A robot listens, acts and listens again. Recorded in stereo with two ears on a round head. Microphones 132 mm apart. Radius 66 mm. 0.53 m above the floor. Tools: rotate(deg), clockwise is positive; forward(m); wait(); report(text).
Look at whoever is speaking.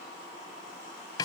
wait()
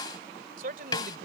rotate(65)
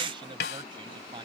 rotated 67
rotate(30)
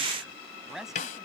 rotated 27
report("Facing the man speaking.")